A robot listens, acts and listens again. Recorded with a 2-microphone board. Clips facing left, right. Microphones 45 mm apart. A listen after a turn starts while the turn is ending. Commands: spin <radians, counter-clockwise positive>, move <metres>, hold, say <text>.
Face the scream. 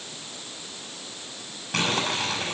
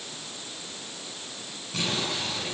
hold
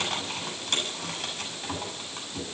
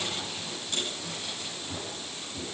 hold
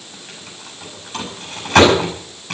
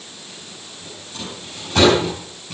say I can't make out a scream to turn to.